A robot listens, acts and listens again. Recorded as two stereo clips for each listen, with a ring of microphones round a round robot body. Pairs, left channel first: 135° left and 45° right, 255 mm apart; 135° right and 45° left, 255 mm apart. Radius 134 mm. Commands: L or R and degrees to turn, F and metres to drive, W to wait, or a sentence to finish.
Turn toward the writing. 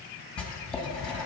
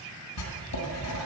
R140
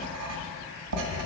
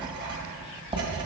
R25
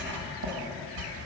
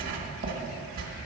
Facing the writing.